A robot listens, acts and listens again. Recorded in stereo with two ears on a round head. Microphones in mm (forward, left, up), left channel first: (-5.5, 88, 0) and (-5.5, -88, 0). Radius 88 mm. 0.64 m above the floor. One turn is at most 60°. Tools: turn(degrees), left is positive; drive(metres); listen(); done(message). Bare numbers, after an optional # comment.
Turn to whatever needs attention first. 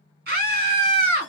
# The scream: about 50° right or 130° right.
turn(-50)
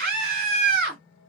# So it is at 65° right.
turn(-60)
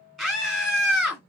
done("Facing the scream, 1 to 2 m away.")